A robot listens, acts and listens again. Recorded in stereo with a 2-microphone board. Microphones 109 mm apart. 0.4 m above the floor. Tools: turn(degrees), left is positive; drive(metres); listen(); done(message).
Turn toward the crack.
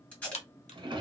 turn(degrees=90)
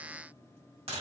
done("Facing where the crack came from. I can't hear it now.")